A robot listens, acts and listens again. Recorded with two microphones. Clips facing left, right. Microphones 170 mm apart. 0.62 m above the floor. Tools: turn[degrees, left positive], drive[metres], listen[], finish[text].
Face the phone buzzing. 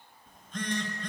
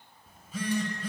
Action: turn[-30]
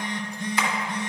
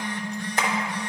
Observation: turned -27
Thought: So it is at 25° left.
Action: turn[25]
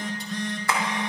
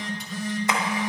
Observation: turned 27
Action: finish[Found it: a phone buzzing, straight ahead, under 1 m away.]